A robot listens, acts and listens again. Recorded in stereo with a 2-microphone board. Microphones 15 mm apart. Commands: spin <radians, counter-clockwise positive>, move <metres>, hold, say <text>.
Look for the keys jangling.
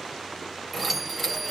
spin 0.52
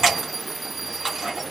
spin -0.52
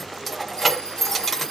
say Found it: keys jangling, straight ahead.